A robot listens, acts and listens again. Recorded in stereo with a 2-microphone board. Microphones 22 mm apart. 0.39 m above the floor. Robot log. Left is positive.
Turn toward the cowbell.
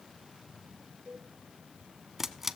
note: The cowbell: about 70° left or 110° left.
cmd yaw +70
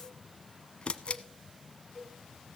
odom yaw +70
note: So it is at 20° left.
cmd yaw +20
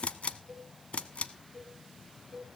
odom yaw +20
end: Facing the cowbell, 2 to 4 m away.